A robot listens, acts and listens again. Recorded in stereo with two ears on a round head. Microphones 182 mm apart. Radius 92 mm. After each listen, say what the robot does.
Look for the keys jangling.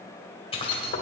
Turn 30° left.
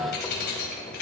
Turn 125° left.
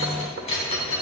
Turn 30° left.
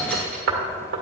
Found it: keys jangling, straight ahead, over 4 m away.